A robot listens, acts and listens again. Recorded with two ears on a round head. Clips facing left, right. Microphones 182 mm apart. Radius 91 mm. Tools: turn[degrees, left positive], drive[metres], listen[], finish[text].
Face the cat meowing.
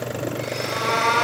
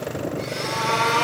Thought: The cat meowing: about 15° left or 165° left.
Action: turn[15]
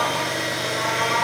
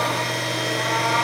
Action: turn[30]
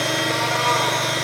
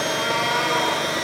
Thought: So it is at 30° right.
Action: turn[-30]
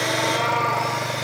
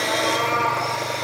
Action: finish[Found it: a cat meowing, straight ahead.]